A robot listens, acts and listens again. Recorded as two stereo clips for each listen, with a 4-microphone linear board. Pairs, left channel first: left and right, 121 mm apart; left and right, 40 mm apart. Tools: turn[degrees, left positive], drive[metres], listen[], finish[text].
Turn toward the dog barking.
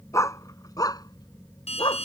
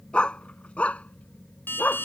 Thought: The dog barking: about 40° left or 140° left.
Action: turn[40]
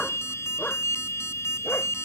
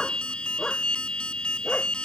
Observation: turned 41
Thought: So it is at 15° left.
Action: turn[15]
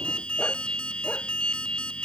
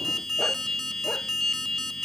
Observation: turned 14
Action: listen[]
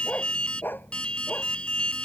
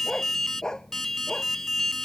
Thought: The dog barking is now 15° left.
Action: turn[15]
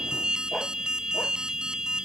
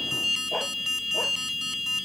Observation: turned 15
Action: listen[]
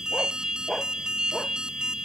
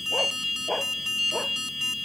Action: finish[Facing the dog barking.]